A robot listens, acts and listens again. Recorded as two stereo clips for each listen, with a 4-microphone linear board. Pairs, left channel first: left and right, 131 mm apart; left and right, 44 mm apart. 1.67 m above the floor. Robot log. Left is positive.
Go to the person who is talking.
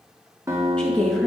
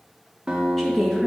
cmd yaw +30
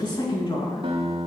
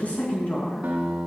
note: So it is at 140° left.
cmd yaw +140
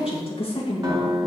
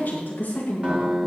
note: The woman speaking is now 50° left.
cmd yaw +50
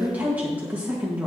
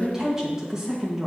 note: The woman speaking is now 15° right.
cmd yaw -15
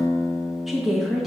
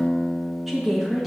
cmd fwd 1.0
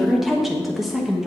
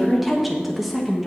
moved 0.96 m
cmd fwd 1.0
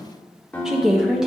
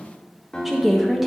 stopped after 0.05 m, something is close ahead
end: I am next to the woman speaking.